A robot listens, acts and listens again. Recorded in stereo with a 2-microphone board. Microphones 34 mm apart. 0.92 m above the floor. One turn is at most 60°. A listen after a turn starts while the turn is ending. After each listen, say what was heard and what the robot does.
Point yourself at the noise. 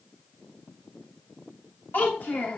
Turn 60° left.
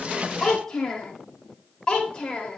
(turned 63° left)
So it is at 30° left. Turn 30° left.
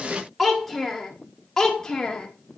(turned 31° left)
The child speaking is now 25° left. Turn 25° left.
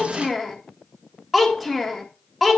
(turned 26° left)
Found it: a child speaking, straight ahead.